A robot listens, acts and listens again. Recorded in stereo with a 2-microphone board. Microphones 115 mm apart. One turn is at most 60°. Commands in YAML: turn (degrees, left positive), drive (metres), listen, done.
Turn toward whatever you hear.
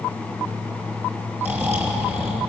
turn: -20
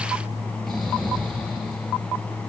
listen: true
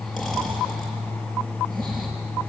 listen: true
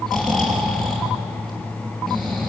done: "Facing the snoring, over 4 m away."